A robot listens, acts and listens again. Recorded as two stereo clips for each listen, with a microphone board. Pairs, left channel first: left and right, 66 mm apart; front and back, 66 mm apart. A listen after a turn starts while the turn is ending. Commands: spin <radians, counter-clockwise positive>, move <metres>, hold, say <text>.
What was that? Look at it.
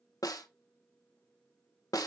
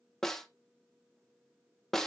spin 1.40
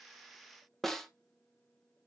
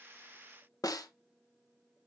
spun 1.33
say Found it: a snare drum, straight ahead, 1 to 2 m away.